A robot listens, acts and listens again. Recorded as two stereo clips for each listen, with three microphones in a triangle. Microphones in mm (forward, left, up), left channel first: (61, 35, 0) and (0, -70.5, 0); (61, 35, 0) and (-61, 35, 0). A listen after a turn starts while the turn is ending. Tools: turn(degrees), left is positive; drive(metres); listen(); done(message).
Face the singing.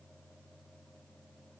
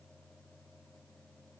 listen()
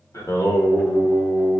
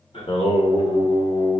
turn(degrees=-15)
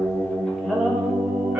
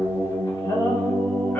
turn(degrees=-60)
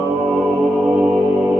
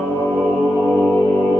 turn(degrees=-50)
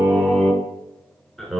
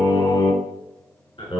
turn(degrees=-25)
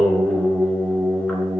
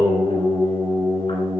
turn(degrees=-15)
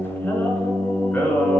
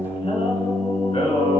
done("Facing the singing.")